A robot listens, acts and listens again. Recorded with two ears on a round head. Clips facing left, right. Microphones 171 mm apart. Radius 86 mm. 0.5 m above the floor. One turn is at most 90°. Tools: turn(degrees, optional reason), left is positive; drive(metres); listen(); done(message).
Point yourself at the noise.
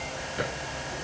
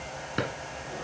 turn(degrees=-90)
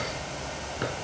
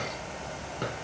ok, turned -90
turn(degrees=10, reason="So it is at 10° left.")
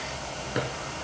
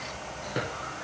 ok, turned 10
done("Found it: a drawer, straight ahead.")